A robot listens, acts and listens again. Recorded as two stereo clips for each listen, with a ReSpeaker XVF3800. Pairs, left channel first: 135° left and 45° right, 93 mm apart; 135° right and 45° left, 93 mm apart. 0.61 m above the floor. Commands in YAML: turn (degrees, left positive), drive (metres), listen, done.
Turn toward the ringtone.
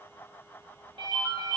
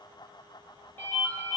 turn: -70
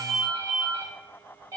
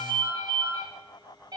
done: "Found it: a ringtone, straight ahead, 1 to 2 m away."